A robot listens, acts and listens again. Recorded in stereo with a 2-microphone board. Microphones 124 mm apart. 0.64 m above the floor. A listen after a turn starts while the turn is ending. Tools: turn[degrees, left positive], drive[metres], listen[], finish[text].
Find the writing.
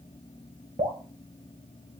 Action: listen[]
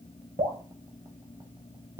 Action: listen[]
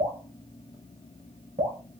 Action: finish[I can't make out writing to turn to.]